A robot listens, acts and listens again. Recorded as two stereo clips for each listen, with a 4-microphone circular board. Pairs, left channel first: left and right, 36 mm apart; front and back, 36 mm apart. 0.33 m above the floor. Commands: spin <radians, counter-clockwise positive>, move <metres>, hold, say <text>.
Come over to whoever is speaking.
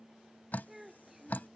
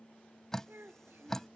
spin -2.97
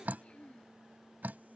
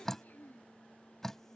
spin 0.61
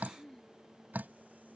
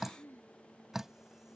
spin 0.26
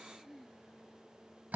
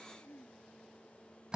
move 1.0
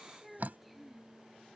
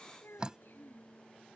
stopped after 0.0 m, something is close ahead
say Something is in my way. I am facing the child speaking but have not reached it.